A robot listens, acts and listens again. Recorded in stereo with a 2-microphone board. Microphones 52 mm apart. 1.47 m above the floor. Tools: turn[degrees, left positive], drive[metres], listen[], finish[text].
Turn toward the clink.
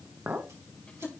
Thought: The clink: about 40° right or 140° right.
Action: turn[-40]
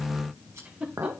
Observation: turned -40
Thought: So it is at 95° right.
Action: turn[-95]
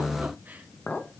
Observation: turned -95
Thought: The clink is now 30° left.
Action: turn[30]
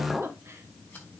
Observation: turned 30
Action: finish[Facing the clink.]